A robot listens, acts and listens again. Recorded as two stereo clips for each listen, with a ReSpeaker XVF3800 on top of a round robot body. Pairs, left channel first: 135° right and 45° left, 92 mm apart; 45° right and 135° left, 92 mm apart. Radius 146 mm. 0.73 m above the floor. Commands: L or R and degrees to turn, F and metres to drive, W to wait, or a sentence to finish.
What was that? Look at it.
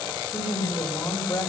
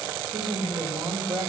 L160
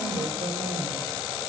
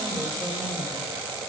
W
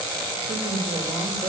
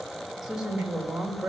L50
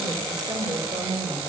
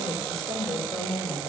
Facing the woman speaking, 2 to 4 m away.